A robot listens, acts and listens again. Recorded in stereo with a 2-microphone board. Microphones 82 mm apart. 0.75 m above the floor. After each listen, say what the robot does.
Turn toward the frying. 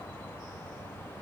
Keep listening.
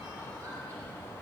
Keep listening.
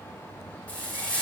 Turn 15° left.
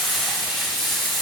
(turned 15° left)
Facing the frying.